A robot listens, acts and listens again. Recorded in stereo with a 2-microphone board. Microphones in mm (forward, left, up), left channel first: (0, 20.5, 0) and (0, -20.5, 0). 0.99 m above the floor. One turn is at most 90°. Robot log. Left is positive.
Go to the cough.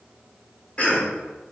note: The cough: about 30° left or 150° left.
cmd yaw +30
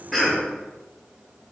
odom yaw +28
cmd fwd 1.0
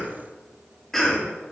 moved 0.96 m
note: The cough is now 10° left.
cmd yaw +10
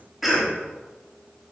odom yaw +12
cmd fwd 1.0
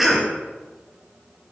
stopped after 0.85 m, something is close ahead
end: Arrived at the cough, straight ahead.